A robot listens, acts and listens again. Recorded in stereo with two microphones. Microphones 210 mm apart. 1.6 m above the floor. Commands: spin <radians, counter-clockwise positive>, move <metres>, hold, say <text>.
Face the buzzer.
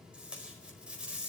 hold
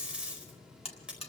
spin 0.44
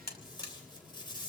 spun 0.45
spin 2.09
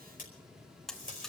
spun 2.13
say Found it: a buzzer, straight ahead, 1 to 2 m away.